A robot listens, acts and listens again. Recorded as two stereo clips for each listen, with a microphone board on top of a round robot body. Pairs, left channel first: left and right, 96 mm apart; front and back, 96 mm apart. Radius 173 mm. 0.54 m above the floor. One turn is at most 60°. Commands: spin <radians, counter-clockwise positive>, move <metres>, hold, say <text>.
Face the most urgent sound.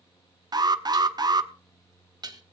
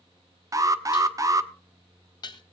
spin -1.05
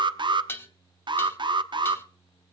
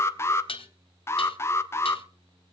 spin -1.05
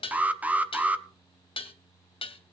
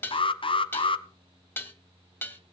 spin -0.26
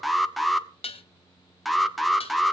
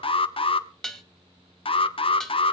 say Found it: an alarm, straight ahead, 1 to 2 m away.